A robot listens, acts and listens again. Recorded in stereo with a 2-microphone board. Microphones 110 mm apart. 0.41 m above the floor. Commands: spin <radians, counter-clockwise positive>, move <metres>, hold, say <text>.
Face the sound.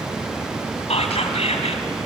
spin 1.22
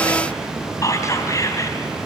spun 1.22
spin 0.52
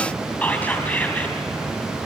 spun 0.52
spin 0.26
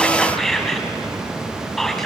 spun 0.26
say Found it: whispering, straight ahead, 2 to 4 m away.